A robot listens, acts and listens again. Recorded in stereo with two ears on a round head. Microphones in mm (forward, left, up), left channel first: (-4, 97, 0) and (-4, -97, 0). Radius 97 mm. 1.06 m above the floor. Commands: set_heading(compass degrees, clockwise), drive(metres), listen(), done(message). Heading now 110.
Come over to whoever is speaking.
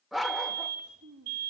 set_heading(200)
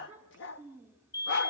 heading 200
set_heading(210)
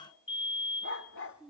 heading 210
drive(1.0)
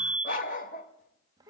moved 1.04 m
set_heading(230)
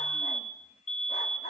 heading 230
listen()
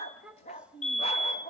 drive(1.0)
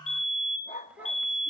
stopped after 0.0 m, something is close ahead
listen()
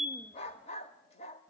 listen()
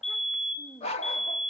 done("I am next to the child speaking.")